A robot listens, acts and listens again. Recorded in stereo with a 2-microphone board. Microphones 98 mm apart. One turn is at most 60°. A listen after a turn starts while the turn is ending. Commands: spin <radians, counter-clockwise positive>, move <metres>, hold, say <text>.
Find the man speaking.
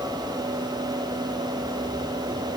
hold
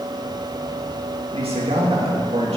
spin -1.05
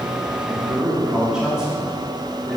say Facing the man speaking.